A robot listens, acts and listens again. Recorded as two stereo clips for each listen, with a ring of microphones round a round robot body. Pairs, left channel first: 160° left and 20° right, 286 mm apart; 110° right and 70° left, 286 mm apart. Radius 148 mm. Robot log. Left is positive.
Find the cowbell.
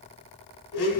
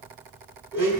cmd idle
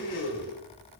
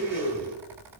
cmd idle
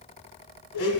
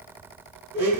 end: I can't make out a cowbell, only a blender.